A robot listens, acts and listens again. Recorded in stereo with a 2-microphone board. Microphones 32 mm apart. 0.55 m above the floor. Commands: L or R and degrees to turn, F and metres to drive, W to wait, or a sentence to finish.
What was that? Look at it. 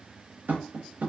R70
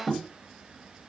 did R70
Facing the tapping, under 1 m away.